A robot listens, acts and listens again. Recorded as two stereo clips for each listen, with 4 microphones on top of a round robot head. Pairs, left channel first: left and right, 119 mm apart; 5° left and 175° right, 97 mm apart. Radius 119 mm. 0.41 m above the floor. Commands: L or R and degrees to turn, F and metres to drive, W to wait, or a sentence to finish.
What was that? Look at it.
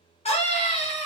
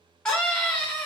L85
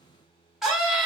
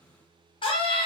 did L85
Facing the scream.